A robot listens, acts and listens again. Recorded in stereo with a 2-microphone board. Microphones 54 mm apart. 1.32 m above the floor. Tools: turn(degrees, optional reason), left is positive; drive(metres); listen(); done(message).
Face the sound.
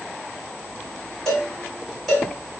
turn(degrees=30)
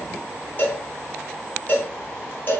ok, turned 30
turn(degrees=145, reason="So it is at 145° left.")
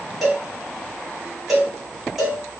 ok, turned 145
done("Facing the cowbell.")